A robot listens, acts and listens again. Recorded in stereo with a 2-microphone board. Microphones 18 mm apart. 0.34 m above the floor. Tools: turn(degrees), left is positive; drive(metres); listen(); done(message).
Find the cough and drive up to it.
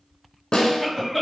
turn(degrees=30)
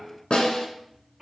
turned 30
turn(degrees=-30)
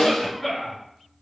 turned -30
drive(metres=1.0)
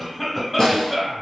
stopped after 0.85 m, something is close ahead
done("Arrived at the cough, straight ahead.")